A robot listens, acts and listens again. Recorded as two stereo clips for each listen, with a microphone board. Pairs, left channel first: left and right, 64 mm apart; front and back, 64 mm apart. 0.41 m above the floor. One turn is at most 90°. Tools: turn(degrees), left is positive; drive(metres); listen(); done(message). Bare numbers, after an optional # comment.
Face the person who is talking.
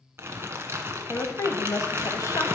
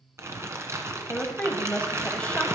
# The woman speaking: 70° left.
turn(70)
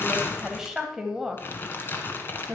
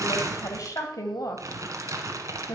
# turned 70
done("Facing the woman speaking.")